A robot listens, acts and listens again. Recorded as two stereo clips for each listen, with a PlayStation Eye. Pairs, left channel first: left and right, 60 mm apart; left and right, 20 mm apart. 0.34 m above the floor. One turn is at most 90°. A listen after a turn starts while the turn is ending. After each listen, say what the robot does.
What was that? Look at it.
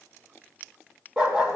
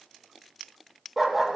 Turn 25° right.
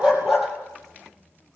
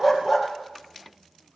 Found it: a dog barking, straight ahead.